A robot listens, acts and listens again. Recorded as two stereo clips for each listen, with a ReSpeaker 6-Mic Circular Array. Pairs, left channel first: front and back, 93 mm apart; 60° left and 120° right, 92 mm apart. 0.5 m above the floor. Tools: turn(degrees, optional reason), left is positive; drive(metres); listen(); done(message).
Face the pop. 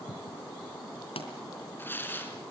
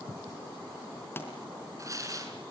done("Found it: a pop, straight ahead, 2 to 4 m away.")